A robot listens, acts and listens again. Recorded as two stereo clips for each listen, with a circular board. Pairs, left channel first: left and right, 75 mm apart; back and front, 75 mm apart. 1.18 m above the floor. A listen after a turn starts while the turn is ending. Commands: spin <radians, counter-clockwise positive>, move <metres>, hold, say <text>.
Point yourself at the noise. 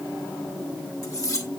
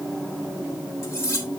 spin 2.27
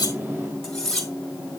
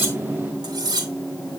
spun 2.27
say Found it: cutlery clinking, straight ahead.